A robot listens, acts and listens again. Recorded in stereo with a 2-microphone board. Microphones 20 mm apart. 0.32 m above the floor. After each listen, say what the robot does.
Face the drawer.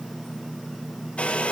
Keep listening.
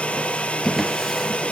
Turn 30° left.
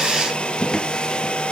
Turn 140° left.
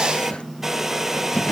Turn 65° left.
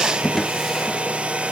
Facing the drawer, 2 to 4 m away.